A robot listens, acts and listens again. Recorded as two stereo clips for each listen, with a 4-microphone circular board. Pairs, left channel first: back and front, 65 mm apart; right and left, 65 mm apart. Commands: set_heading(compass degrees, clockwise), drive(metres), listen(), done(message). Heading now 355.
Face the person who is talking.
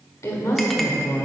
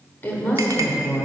set_heading(140)
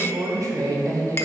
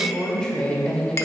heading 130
set_heading(140)
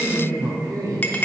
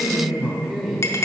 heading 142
done("Found it: a woman speaking, straight ahead, 1 to 2 m away.")